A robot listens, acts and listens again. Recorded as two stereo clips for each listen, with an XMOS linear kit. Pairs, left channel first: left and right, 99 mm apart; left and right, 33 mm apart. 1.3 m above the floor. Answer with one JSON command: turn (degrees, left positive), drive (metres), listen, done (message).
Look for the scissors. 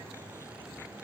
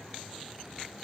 {"listen": true}
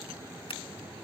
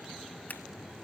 {"listen": true}
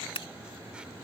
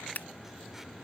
{"turn": 65}
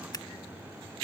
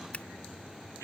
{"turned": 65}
{"listen": true}
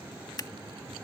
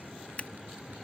{"turn": 45}
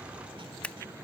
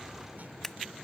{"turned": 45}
{"turn": 15}
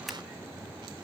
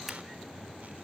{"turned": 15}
{"listen": true}
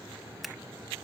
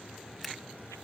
{"done": "Facing the scissors."}